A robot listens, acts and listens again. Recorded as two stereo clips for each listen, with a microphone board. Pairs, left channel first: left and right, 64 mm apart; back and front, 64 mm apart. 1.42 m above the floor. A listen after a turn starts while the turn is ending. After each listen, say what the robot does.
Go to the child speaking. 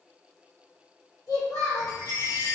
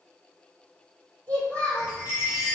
Turn 115° left.
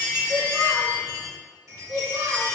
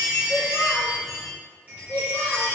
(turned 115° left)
Turn 15° right.
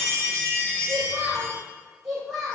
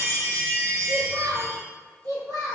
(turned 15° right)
Drive 1.0 m forward.
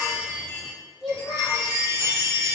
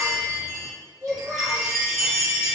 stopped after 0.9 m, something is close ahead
I am next to the child speaking.